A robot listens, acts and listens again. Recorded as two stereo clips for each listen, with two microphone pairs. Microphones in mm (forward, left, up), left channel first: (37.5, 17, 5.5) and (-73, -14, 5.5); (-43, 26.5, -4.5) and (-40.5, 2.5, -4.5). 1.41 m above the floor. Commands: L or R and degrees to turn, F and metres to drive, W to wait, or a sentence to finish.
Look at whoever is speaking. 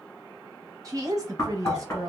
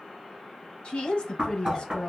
L140
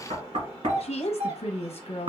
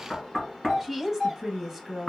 Facing the woman speaking, under 1 m away.